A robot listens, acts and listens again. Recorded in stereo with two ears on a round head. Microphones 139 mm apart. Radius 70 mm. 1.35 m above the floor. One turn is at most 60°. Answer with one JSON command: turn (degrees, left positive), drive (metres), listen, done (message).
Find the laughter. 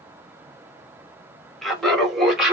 {"turn": -30}
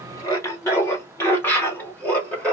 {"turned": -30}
{"turn": 30}
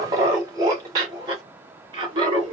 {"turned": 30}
{"turn": -30}
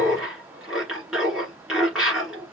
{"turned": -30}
{"done": "Facing the laughter."}